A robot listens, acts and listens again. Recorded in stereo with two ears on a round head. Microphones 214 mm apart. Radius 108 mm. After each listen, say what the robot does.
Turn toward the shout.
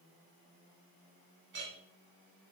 Keep listening.
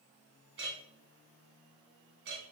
Keep listening.
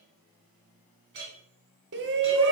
Turn 50° right.
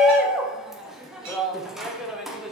Found it: a shout, straight ahead.